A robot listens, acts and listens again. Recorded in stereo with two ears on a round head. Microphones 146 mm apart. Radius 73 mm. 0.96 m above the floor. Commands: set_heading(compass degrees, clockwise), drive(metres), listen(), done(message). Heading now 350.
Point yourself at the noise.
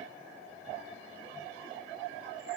listen()
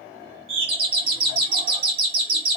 set_heading(25)
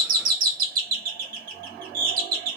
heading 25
set_heading(125)
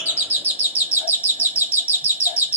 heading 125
set_heading(140)
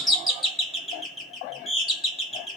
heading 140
done("Facing the doorbell, 1 to 2 m away.")